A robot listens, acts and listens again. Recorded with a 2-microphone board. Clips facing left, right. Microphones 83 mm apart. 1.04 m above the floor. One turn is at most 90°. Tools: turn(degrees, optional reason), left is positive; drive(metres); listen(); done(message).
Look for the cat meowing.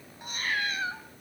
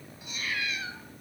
turn(degrees=45, reason="The cat meowing: about 45° left or 135° left.")
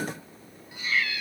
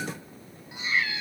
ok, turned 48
turn(degrees=-25, reason="So it is at 25° right.")
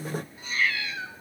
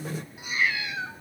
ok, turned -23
turn(degrees=-20, reason="The cat meowing is now 20° right.")
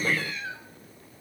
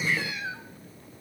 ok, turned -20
turn(degrees=-15, reason="The cat meowing is now 15° right.")
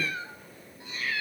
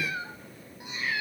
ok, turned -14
turn(degrees=-20, reason="The cat meowing is now 20° right.")
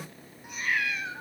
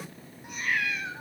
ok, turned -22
done("Facing the cat meowing.")